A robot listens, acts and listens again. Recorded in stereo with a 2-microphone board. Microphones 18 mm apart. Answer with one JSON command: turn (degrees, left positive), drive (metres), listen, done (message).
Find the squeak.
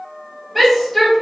{"listen": true}
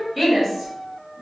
{"listen": true}
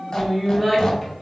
{"turn": 50}
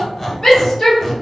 {"turn": 15}
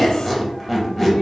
{"done": "Facing the squeak."}